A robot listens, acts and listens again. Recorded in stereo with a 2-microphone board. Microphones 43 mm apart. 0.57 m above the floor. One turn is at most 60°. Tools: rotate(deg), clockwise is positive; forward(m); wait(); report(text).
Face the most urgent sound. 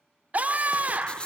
rotate(35)
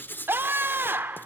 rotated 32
rotate(60)
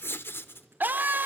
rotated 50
rotate(55)
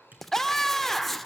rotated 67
rotate(-10)
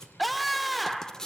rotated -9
report("Found it: a scream, straight ahead, 1 to 2 m away.")